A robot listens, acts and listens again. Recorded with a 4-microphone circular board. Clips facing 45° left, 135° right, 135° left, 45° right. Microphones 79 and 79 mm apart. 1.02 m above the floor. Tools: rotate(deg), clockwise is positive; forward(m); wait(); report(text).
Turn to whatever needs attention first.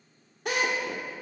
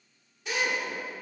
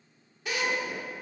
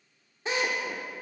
wait()
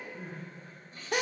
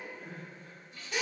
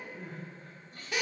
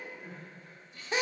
rotate(-90)
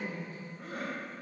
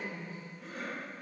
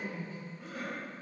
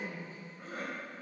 report("Found it: crying, straight ahead, 2 to 4 m away.")